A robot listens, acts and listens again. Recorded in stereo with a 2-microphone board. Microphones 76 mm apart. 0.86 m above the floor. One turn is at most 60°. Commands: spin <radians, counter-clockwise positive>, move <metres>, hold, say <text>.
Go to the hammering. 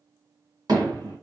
spin -1.05
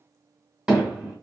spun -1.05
spin -0.17
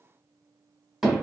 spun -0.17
move 1.0
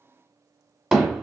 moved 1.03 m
move 1.0
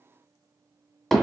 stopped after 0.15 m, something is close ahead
say Arrived at the hammering, straight ahead.